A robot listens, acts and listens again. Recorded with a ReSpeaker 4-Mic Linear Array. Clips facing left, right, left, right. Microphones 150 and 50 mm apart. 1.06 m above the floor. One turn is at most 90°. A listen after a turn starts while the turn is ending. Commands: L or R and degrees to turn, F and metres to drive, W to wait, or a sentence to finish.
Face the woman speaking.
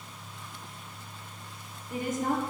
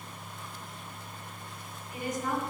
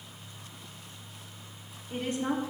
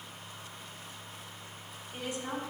L50
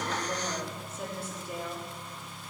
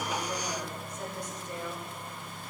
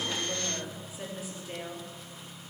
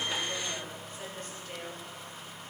L10
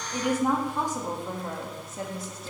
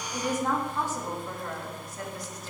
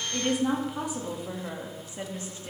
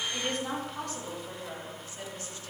L30
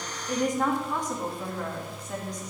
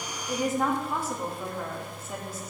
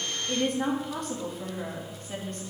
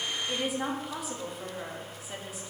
Facing the woman speaking.